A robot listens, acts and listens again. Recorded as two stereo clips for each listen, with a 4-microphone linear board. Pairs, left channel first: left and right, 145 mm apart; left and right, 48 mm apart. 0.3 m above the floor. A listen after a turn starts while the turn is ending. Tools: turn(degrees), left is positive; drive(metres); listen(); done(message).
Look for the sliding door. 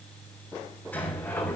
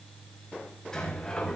turn(degrees=30)
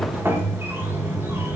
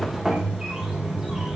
turn(degrees=-15)
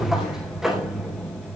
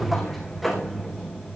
done("Facing the sliding door.")